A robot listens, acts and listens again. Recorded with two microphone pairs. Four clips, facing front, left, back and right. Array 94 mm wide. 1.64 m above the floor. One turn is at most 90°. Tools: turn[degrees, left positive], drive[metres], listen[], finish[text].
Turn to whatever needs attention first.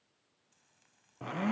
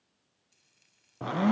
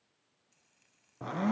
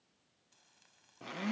Action: listen[]
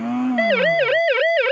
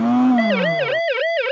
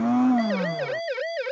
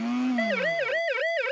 Thought: The siren: 20° left.
Action: turn[20]
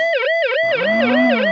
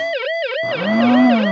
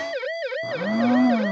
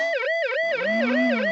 Thought: The siren is now 10° left.
Action: turn[10]
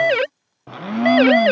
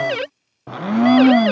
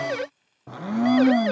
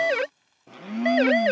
Action: finish[Found it: a siren, straight ahead.]